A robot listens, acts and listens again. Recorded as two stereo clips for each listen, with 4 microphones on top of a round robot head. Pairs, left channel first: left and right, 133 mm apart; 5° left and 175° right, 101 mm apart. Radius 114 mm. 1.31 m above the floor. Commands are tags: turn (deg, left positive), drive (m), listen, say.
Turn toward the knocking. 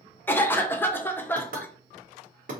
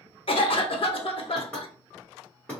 <turn deg="-75"/>
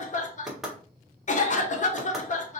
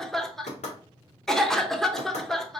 <say>Facing the knocking, 1 to 2 m away.</say>